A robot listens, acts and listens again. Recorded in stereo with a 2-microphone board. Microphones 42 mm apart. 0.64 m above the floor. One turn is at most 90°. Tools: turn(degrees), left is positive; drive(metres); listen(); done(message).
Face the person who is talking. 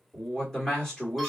turn(degrees=30)
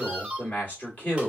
turn(degrees=90)
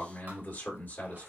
turn(degrees=65)
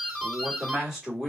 done("Found it: a man speaking, straight ahead.")